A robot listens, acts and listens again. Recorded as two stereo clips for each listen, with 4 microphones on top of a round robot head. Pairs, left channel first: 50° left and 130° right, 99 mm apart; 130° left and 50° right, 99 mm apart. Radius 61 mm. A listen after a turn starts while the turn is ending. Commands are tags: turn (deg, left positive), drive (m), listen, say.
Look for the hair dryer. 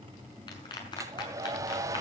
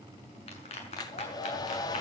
<turn deg="175"/>
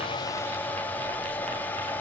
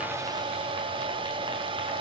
<turn deg="-20"/>
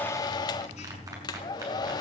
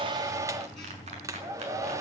<say>Found it: a hair dryer, straight ahead, 1 to 2 m away.</say>